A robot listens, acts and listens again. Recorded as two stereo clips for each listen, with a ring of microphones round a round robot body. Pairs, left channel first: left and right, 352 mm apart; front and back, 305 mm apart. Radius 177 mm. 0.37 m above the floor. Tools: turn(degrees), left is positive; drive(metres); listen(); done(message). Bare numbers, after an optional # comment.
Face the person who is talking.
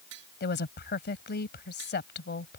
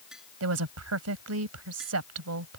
# The woman speaking: 150° left.
turn(150)
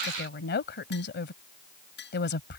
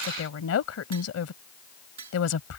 # The woman speaking is now 30° left.
turn(30)
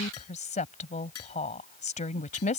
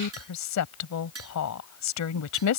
# The woman speaking is now 20° left.
turn(20)
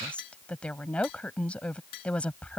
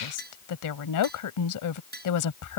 done("Facing the woman speaking.")